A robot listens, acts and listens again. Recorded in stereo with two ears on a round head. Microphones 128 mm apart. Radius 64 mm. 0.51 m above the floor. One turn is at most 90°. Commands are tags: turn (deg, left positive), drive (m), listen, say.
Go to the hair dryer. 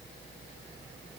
<listen/>
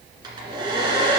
<turn deg="-30"/>
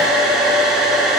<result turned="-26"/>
<drive m="1.0"/>
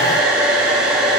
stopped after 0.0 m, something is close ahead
<say>Something is in my way. I am facing the hair dryer but have not reached it.</say>